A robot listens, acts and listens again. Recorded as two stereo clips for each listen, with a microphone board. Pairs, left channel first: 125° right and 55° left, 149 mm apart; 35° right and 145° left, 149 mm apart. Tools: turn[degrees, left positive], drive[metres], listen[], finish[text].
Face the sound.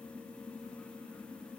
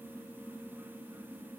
Action: listen[]
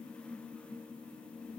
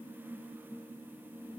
Action: listen[]
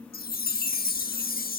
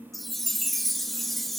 Thought: The chime: 125° right.
Action: turn[-125]
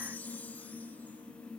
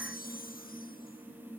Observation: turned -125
Thought: The chime is now 45° right.
Action: turn[-45]
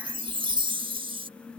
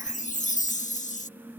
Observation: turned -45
Action: finish[Facing the chime.]